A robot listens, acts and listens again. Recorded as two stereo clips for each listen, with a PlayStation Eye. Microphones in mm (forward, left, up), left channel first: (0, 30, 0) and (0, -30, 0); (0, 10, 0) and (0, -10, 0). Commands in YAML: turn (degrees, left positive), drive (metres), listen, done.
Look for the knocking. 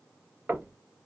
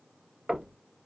turn: -30
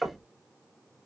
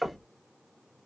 done: "Found it: knocking, straight ahead."